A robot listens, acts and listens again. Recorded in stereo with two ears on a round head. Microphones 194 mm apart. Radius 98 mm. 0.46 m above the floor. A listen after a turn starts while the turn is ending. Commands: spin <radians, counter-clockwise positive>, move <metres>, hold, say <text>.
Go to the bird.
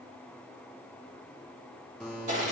hold
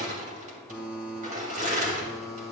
hold
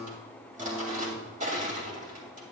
say I can't make out a bird to turn to.